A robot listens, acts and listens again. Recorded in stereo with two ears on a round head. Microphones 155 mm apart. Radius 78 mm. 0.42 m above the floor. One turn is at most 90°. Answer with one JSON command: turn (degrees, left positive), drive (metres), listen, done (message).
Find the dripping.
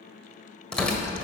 {"listen": true}
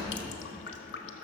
{"turn": 65}
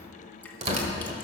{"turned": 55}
{"listen": true}
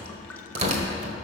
{"listen": true}
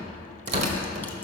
{"done": "I heard dripping, but can't make it out now. It was about 10° left or 60° left."}